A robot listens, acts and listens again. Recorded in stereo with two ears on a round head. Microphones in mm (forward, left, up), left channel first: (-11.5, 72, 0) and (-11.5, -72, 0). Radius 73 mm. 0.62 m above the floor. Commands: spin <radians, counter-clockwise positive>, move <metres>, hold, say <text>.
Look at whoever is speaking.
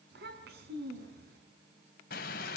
spin -1.22
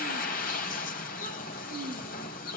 hold
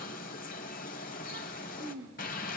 spin -0.70
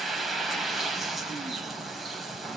hold
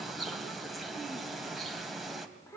spin 0.26
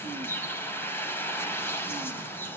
hold
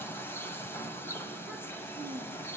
say Found it: a child speaking, straight ahead, over 4 m away.